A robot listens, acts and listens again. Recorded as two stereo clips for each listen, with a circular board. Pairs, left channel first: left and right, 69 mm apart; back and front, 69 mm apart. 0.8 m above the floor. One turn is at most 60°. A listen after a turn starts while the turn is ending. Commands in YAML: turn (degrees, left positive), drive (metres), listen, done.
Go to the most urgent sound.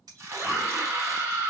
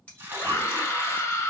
turn: -60
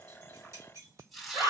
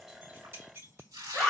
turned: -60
turn: -60
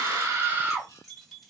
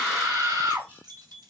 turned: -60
turn: -30
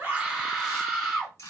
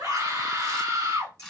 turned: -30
turn: 10
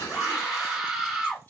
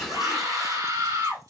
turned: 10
drive: 1.0
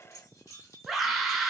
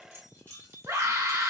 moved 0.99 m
drive: 1.0
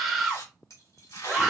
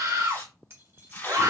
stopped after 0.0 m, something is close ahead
done: "Arrived at the scream, straight ahead."